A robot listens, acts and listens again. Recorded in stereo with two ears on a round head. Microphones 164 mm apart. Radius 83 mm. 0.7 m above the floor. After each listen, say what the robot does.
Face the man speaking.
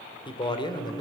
Turn 25° left.
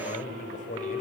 Turn 135° left.
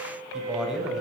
Facing the man speaking, 2 to 4 m away.